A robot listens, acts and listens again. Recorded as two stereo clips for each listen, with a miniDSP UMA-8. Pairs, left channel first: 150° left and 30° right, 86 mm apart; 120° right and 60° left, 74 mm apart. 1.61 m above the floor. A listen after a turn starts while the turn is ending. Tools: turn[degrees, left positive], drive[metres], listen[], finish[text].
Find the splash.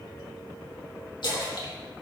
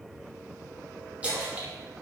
Thought: The splash: 130° left.
Action: turn[130]
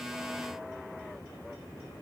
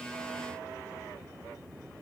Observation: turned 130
Action: finish[Facing where the splash came from. I can't hear it now.]